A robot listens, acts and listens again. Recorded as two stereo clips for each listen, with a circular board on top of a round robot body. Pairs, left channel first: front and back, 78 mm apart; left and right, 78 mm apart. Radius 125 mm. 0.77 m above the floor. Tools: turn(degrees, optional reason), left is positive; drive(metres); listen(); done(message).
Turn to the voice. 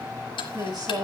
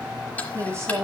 turn(degrees=-145, reason="The woman speaking: 145° right.")
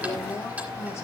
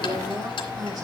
turn(degrees=-55, reason="The woman speaking is now 55° right.")
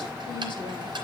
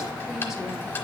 listen()
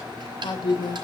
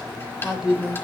done("Facing the woman speaking, over 4 m away.")